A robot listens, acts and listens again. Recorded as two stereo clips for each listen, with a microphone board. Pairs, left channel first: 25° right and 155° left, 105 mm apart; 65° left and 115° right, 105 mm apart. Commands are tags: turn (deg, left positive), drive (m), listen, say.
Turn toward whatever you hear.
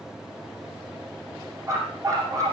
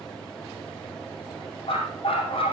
<turn deg="100"/>
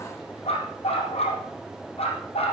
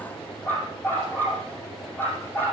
<say>Facing the dog barking.</say>